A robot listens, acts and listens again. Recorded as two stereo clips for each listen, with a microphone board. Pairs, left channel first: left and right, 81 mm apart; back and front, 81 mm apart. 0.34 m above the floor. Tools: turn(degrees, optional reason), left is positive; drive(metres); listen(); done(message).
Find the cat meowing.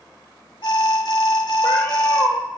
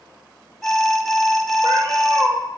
turn(degrees=25, reason="The cat meowing: 25° left.")
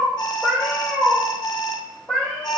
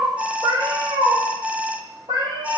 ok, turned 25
turn(degrees=10, reason="The cat meowing is now 10° left.")
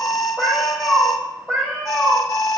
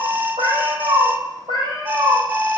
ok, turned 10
turn(degrees=10, reason="The cat meowing is now 10° left.")
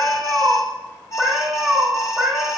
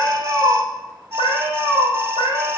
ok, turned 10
done("Facing the cat meowing.")